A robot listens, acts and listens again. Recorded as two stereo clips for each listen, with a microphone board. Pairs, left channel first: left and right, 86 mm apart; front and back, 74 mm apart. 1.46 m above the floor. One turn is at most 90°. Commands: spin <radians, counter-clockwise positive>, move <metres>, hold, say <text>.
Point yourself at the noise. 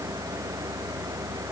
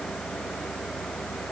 hold
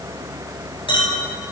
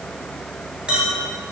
spin 1.57
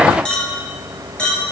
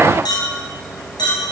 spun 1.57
spin 0.17
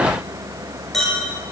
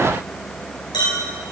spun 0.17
say Found it: a clink, straight ahead, over 4 m away.